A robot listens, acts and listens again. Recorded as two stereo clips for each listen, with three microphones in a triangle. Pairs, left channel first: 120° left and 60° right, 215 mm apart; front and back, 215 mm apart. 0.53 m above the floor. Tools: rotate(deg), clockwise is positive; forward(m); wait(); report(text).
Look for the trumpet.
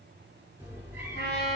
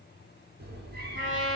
rotate(-160)
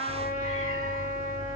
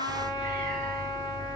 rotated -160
rotate(-70)
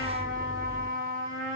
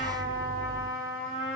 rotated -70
rotate(10)
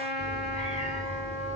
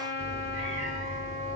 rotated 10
report("Found it: a trumpet, straight ahead.")